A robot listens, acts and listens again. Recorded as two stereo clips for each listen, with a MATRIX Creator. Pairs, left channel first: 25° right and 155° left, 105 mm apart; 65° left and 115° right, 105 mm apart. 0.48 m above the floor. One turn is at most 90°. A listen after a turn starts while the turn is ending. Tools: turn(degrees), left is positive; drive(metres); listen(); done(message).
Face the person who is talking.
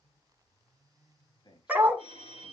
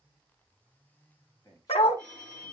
turn(degrees=15)
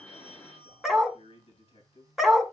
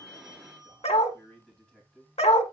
turn(degrees=-15)
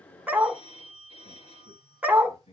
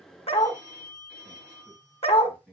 turn(degrees=-15)
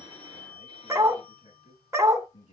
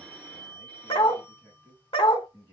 done("Found it: a man speaking, straight ahead, over 4 m away.")